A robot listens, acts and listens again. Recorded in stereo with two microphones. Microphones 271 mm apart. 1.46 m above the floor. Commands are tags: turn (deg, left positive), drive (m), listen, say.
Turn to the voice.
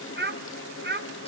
<turn deg="-40"/>
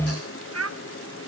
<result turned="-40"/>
<turn deg="-95"/>
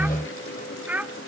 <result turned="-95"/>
<say>Found it: a child speaking, straight ahead, 1 to 2 m away.</say>